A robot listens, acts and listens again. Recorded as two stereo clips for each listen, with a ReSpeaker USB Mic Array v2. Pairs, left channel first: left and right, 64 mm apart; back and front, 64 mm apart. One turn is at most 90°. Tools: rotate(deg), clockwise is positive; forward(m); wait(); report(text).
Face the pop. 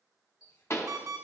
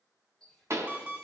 rotate(-45)
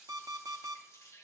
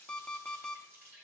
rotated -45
report("I heard a pop from this way, but can't make it out now.")